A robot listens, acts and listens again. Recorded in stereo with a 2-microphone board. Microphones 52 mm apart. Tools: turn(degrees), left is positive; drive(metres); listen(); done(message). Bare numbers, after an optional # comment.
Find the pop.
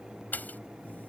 # The pop: about 35° left or 145° left.
turn(35)
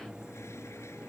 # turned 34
listen()
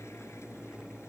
done("I heard a pop, but can't make it out now. It was about 5° left or 110° left.")